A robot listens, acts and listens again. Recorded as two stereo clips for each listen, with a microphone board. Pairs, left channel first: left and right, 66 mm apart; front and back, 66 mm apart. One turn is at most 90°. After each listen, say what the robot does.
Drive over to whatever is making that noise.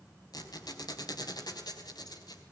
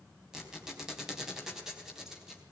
Turn 90° left.
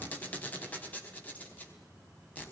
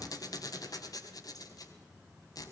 Turn 20° left.
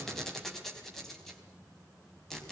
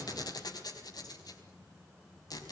Drive 1.0 m forward.
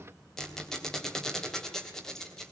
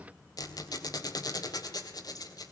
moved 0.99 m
Drive 1.0 m forward.
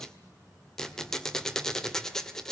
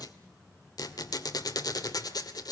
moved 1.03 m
Drive 1.0 m forward.
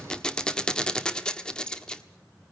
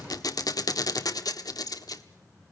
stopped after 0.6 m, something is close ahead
Turn 10° left.
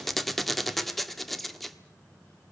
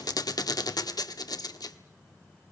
Arrived at the squeak, straight ahead.